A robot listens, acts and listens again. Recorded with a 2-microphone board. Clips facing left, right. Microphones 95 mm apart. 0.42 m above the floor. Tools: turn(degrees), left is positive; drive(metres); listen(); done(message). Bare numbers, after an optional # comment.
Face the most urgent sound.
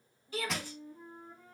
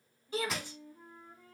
# The shout: about 25° right or 155° right.
turn(-25)
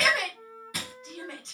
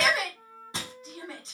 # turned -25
done("Found it: a shout, straight ahead, 1 to 2 m away.")